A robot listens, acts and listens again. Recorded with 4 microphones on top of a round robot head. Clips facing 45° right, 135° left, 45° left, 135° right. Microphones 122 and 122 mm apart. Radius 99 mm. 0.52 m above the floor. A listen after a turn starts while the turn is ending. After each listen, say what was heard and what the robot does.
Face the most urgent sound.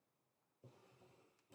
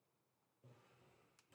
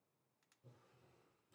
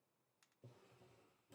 Keep listening.
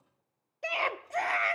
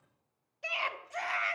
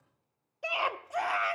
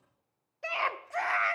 The scream: 25° right. Turn 25° right.
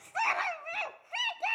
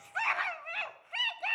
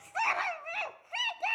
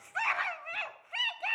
Found it: a scream, straight ahead, 1 to 2 m away.